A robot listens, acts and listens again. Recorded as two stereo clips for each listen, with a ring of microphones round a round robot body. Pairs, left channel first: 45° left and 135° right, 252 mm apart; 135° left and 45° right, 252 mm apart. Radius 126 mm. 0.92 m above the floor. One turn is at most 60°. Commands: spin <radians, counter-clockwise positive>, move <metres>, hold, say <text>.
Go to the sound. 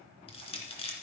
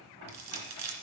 spin -0.44
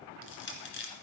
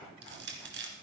move 1.0
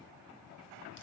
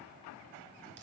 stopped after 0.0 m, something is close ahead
hold
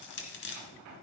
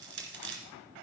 say Something is in my way. I am facing the crushing but have not reached it.